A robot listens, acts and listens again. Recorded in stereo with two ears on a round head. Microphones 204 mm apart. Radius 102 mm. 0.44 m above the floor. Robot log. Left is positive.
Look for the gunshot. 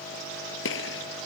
note: The gunshot: about 60° left or 120° left.
cmd yaw +60
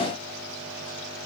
cmd idle
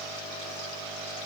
end: I heard a gunshot, but can't make it out now. It was about straight ahead or 60° left.